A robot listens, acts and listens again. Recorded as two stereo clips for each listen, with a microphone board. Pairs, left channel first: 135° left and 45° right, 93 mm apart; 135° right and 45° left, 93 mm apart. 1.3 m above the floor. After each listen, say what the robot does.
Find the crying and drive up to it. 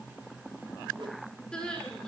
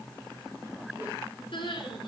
Turn 145° right.
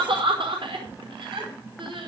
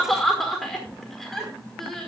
Turn 50° right.
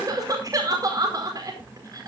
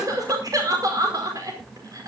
Drive 1.0 m forward.
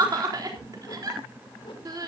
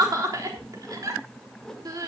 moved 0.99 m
Drive 1.0 m forward.
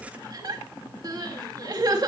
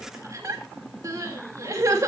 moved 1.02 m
Drive 1.0 m forward.
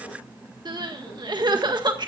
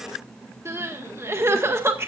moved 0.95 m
Turn 15° right.
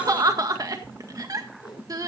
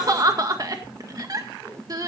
Drive 1.0 m forward.
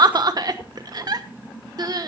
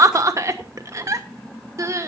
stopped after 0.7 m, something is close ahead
Arrived at the crying, straight ahead.